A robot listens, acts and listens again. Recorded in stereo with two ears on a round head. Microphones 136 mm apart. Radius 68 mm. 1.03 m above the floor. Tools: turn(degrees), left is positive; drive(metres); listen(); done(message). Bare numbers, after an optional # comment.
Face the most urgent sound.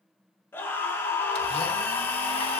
# The scream: about 15° left or 165° left.
turn(15)
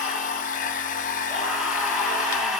done("Facing the scream, 2 to 4 m away.")